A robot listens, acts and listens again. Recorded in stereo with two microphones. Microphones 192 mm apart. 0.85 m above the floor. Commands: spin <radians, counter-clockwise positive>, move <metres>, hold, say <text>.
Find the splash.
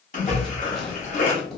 spin 0.70
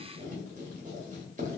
hold
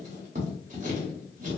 say I heard a splash, but can't make it out now. It was about straight ahead or 100° left.